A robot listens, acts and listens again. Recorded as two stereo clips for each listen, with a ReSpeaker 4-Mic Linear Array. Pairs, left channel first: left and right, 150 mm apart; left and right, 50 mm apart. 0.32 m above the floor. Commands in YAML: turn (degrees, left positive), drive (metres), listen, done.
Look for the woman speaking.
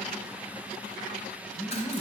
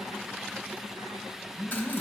turn: 30
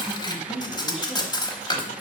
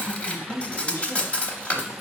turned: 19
turn: 135
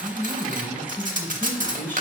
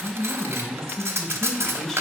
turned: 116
turn: 15
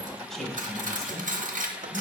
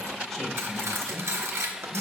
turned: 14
done: "Found it: a woman speaking, straight ahead, 1 to 2 m away."